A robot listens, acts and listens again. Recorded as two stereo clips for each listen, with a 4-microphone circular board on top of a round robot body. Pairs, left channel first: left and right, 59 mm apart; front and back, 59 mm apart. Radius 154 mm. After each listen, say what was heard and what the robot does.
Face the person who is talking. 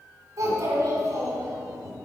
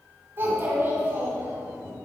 The child speaking: 130° right. Turn 130° right.
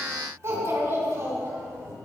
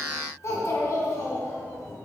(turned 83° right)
The child speaking is now 45° right. Turn 45° right.
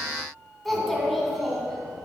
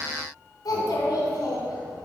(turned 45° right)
Found it: a child speaking, straight ahead.